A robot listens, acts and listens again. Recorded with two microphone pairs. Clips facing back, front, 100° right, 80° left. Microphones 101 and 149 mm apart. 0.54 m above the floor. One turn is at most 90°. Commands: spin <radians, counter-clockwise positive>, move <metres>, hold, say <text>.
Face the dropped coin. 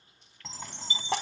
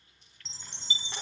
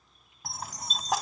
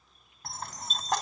spin 1.57
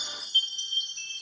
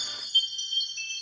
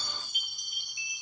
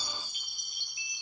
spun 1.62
spin 1.40
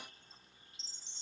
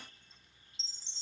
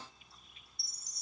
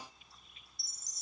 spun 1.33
say I heard a dropped coin from this way, but can't make it out now.